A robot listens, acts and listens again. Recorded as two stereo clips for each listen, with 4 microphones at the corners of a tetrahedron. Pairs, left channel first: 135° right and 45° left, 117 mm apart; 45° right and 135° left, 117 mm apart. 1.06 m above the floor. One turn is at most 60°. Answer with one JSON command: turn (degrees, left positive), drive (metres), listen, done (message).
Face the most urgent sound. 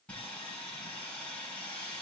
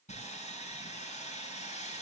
{"listen": true}
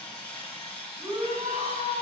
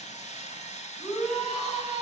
{"turn": 45}
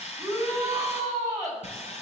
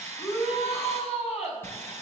{"turn": -15}
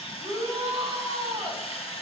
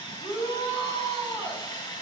{"done": "Facing the shout, over 4 m away."}